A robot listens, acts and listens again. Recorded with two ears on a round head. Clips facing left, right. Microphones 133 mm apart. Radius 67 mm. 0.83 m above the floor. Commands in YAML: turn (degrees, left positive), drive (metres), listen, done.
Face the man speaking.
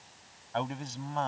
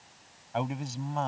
turn: -30
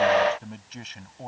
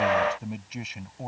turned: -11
turn: -30
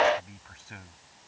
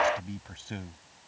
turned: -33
turn: -145
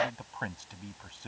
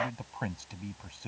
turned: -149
done: "Facing the man speaking."